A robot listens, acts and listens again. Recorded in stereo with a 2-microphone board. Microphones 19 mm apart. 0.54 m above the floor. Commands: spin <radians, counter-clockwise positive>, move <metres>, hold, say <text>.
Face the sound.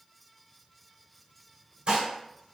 spin -0.87
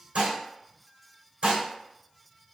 spin -1.40
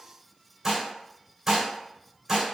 spin -0.35
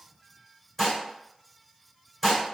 say Found it: dishes clattering, straight ahead, 1 to 2 m away.